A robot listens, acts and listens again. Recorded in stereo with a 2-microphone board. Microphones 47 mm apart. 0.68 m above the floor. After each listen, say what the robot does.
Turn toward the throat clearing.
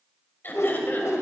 Turn 45° left.
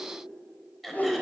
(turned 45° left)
Facing the throat clearing.